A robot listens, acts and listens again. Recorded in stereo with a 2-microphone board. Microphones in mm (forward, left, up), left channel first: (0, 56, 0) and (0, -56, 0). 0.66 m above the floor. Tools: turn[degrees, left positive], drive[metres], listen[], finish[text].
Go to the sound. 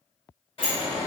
Thought: The sliding door: about 60° left or 120° left.
Action: turn[60]
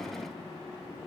Action: listen[]
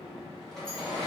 Action: drive[1.0]
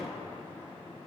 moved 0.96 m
Action: listen[]
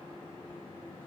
Action: listen[]
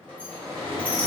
Thought: The sliding door is now 15° left.
Action: turn[15]
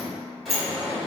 Action: drive[1.0]
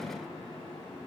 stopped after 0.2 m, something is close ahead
Action: listen[]
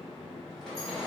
Action: finish[I am next to the sliding door.]